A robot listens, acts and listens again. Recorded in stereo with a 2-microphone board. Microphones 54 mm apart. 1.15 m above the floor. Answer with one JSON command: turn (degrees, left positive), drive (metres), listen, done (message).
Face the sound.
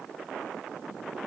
{"listen": true}
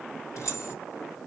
{"turn": 90}
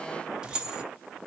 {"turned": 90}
{"turn": -20}
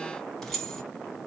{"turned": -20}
{"turn": 10}
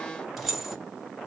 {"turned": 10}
{"done": "Facing the keys jangling, 1 to 2 m away."}